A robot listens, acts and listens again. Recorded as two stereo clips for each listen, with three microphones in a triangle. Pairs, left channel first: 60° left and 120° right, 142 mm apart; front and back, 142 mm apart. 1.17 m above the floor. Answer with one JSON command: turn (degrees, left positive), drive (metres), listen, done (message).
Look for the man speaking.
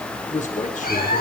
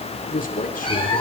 {"turn": 25}
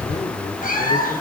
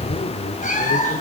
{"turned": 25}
{"turn": 10}
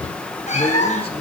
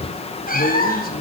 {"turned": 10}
{"listen": true}
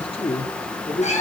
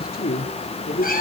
{"turn": 15}
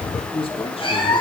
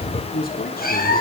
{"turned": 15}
{"turn": 10}
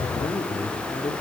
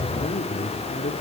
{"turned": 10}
{"done": "Facing the man speaking."}